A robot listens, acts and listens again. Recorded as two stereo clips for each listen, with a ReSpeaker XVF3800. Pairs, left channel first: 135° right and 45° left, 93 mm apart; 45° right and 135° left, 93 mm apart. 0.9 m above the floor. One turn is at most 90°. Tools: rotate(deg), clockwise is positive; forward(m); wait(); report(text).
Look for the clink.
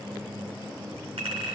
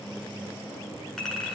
rotate(-45)
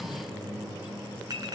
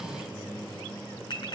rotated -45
report("Facing the clink.")